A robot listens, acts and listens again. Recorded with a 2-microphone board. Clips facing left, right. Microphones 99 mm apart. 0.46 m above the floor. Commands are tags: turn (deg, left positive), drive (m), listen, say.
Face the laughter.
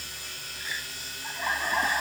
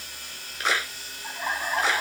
<turn deg="-30"/>
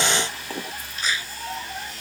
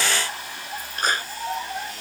<turn deg="-160"/>
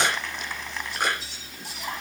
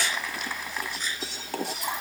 <turn deg="-10"/>
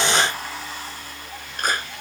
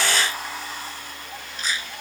<say>Facing the laughter.</say>